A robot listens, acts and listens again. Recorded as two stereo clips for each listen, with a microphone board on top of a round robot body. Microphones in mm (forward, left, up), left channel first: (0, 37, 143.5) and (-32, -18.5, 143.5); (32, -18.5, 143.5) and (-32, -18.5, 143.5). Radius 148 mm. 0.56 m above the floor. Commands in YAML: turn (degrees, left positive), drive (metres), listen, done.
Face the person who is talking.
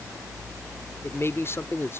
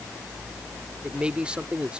turn: 105
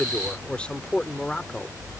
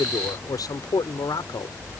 turn: -15
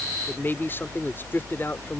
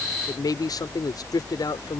done: "Facing the man speaking."